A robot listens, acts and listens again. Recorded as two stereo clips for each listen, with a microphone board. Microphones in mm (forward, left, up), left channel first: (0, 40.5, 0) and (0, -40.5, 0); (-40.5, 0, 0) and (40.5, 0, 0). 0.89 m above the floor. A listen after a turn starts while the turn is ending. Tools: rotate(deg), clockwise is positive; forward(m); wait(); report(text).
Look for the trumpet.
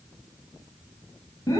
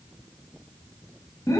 wait()
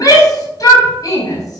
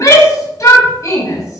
wait()
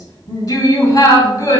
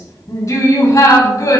report("I can't make out a trumpet to turn to.")